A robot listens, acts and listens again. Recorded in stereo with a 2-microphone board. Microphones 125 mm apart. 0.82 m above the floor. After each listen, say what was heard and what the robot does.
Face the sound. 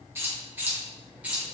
Turn 30° right.
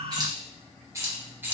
The keys jangling: about 15° right or 165° right. Turn 15° right.
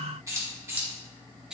Turn 30° right.
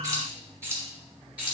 Turn 30° right.
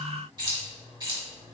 So it is at 140° right. Turn 140° right.
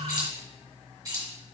The keys jangling is now 30° right. Turn 30° right.
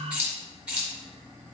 The keys jangling is now 10° right. Turn 10° right.
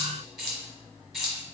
Facing the keys jangling.